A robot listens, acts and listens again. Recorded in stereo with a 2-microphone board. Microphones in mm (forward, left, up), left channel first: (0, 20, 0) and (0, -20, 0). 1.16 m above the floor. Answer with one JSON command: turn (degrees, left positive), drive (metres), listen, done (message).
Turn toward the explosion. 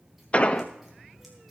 {"turn": 30}
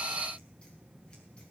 {"listen": true}
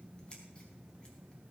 {"done": "I heard an explosion, but can't make it out now. It was about straight ahead or 120° left."}